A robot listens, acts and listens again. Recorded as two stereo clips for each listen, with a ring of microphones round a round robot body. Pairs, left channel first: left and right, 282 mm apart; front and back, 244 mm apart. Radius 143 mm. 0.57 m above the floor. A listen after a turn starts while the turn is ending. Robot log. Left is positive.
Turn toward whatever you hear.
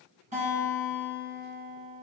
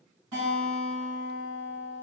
note: The guitar: 155° right.
cmd yaw -155
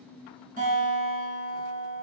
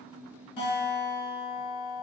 note: The guitar is now 30° right.
cmd yaw -30
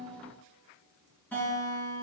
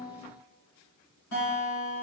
end: Facing the guitar.